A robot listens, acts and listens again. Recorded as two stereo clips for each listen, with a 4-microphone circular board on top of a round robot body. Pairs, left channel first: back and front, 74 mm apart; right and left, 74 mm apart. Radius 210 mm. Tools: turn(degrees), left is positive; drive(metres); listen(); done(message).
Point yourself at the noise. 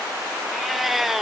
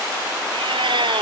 turn(degrees=85)
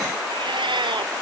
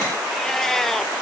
done("Facing the cat meowing.")